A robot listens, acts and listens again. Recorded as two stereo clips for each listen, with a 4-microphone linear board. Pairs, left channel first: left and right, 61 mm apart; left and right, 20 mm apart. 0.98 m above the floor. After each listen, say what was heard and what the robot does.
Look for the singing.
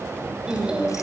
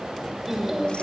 The singing: about 15° right or 165° right. Turn 15° right.
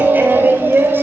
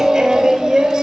The singing: about 35° right or 145° right. Turn 35° right.
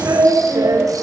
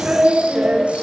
So it is at 110° right. Turn 110° right.
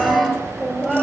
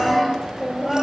Found it: singing, straight ahead, over 4 m away.